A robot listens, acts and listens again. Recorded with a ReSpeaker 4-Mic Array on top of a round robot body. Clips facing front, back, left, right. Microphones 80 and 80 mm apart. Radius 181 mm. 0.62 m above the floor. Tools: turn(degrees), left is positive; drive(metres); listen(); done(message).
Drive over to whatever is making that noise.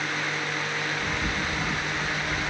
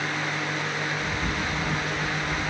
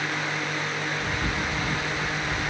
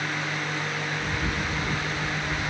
turn(degrees=55)
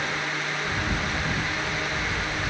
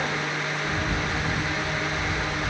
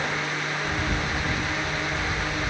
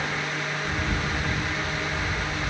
turn(degrees=20)
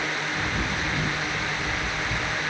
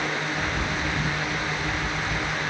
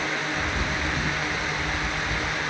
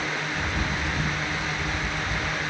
turn(degrees=10)
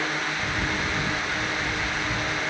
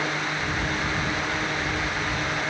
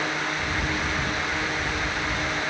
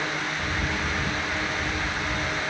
drive(metres=1.0)
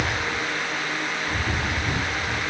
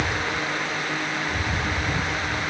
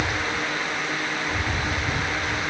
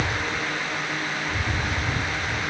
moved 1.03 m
turn(degrees=10)
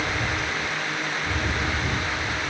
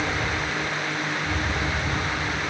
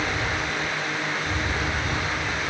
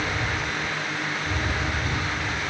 drive(metres=1.0)
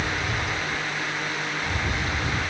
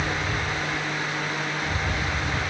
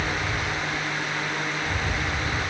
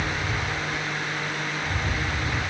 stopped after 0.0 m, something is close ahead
done("I am next to the bird.")